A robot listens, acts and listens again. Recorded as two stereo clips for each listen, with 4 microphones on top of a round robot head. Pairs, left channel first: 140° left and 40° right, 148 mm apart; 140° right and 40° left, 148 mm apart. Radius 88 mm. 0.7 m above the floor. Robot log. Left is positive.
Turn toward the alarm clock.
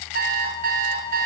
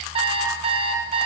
note: The alarm clock: 15° right.
cmd yaw -15
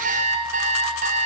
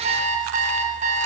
end: Found it: an alarm clock, straight ahead.